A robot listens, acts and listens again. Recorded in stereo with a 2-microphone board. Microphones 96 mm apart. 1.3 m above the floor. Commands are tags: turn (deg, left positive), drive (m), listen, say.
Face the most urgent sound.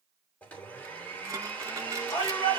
<turn deg="60"/>
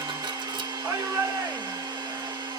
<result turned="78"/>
<turn deg="-15"/>
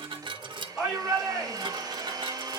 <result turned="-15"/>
<say>Facing the shout, over 4 m away.</say>